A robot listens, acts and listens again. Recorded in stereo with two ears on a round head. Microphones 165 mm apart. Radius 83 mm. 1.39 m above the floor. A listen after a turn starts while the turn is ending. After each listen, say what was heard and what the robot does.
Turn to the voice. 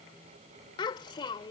The child speaking: about 25° left or 155° left. Turn 25° left.
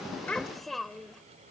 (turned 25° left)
Facing the child speaking.